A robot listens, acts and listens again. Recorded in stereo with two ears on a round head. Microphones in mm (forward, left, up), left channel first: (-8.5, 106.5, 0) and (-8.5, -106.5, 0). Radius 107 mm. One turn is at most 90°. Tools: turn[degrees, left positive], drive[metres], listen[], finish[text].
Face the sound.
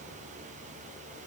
Action: listen[]
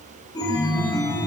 Thought: The chime: about 15° left or 165° left.
Action: turn[15]
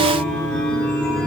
Action: finish[Found it: a chime, straight ahead, under 1 m away.]